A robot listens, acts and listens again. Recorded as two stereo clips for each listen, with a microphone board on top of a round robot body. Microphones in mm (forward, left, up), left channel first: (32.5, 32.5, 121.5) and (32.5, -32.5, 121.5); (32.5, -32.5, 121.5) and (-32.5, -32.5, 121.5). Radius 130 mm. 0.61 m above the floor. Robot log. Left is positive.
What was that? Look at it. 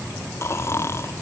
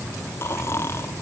note: The snoring: 45° left.
cmd yaw +45
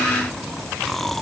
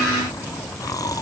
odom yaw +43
end: Facing the snoring.